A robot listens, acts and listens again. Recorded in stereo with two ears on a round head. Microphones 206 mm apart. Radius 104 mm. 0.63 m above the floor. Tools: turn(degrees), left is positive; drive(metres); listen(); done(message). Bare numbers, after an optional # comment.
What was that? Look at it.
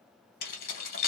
# The keys jangling: about 40° left or 140° left.
turn(40)
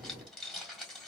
done("Found it: keys jangling, straight ahead, 1 to 2 m away.")